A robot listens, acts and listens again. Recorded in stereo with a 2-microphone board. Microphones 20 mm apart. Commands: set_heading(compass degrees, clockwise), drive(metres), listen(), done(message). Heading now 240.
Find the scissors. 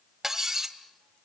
listen()
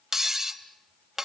listen()
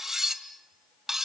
done("I can't make out scissors, only cutlery clinking.")